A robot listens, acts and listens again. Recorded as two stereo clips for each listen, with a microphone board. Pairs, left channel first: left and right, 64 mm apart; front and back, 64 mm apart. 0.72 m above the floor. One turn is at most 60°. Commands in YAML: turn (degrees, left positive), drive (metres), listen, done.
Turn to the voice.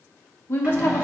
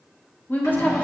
turn: 50
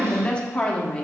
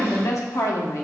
turn: 20
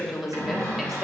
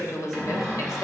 done: "Facing the woman speaking, 1 to 2 m away."